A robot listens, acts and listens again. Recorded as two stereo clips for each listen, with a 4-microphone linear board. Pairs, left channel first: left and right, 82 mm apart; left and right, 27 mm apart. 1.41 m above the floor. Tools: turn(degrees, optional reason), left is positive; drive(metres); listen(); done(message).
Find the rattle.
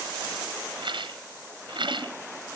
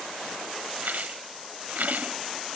turn(degrees=-90)
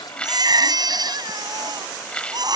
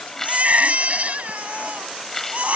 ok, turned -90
turn(degrees=15, reason="So it is at 15° left.")
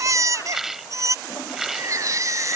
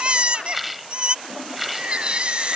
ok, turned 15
done("Found it: a rattle, straight ahead.")